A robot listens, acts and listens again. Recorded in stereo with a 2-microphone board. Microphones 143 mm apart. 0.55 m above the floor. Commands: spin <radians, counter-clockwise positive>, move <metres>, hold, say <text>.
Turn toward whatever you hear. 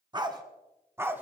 spin -0.52
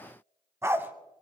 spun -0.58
spin -0.52
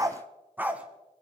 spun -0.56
spin -0.52
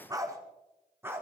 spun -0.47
spin -0.52
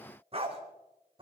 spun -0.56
spin -2.44
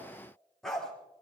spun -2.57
say Found it: a dog barking, straight ahead.